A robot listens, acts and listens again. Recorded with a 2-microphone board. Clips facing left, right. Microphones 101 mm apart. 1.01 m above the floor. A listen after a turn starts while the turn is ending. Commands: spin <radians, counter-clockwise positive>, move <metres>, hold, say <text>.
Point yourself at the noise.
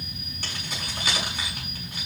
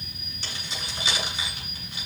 spin 0.87
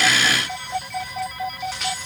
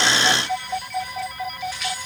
hold
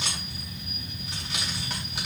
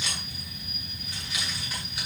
spin 1.31
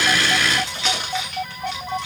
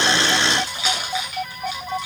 spin -0.17
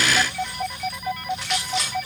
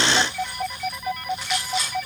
say Found it: keys jangling, straight ahead.